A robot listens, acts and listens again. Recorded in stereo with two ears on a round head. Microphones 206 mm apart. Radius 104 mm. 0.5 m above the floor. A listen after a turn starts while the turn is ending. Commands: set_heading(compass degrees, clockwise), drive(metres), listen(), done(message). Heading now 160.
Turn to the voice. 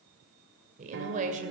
set_heading(195)
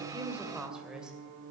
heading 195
done("Found it: a woman speaking, straight ahead, 2 to 4 m away.")